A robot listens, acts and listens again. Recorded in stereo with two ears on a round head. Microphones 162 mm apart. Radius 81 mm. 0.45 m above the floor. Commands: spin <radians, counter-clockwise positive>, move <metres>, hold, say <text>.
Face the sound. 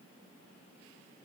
hold
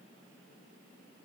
hold
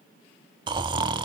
spin -0.44
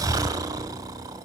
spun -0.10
spin -0.35
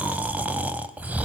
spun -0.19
spin -0.17
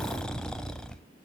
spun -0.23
say Facing the snoring, under 1 m away.